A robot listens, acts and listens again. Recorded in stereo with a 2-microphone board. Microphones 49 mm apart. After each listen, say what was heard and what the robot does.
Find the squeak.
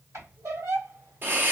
Turn 90° right.
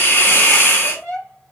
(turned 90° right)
So it is at 15° left. Turn 15° left.
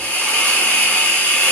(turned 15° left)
Keep listening.
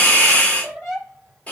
Found it: a squeak, straight ahead.